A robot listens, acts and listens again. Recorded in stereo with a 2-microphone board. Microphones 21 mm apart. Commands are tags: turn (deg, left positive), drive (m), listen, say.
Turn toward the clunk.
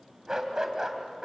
<listen/>
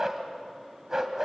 <listen/>
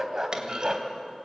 <turn deg="-35"/>
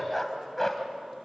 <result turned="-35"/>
<listen/>
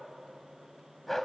<say>I heard a clunk, but can't make it out now. It was about straight ahead or 110° right.</say>